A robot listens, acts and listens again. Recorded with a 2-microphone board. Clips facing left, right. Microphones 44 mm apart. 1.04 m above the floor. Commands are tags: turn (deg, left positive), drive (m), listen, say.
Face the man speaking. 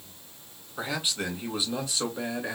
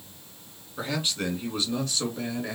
<turn deg="20"/>
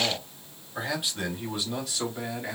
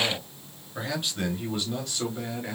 <turn deg="30"/>
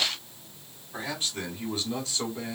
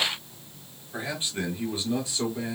<turn deg="-10"/>
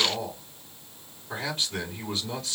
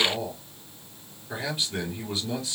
<say>Found it: a man speaking, straight ahead, 2 to 4 m away.</say>